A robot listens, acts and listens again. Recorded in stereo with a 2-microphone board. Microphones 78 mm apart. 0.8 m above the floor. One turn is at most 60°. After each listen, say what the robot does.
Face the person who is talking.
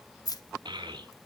Turn 60° right.
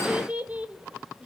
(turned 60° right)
Turn 15° right.
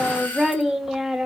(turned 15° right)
Found it: a child speaking, straight ahead.